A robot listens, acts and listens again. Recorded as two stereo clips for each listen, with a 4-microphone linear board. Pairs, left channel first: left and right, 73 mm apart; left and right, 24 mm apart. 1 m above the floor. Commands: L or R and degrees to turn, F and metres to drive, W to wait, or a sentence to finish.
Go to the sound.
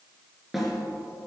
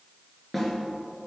R30
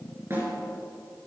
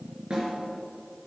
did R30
R145
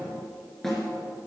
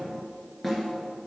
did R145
F1.0
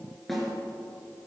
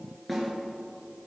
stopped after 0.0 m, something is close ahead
Blocked. The snare drum is further on, straight ahead.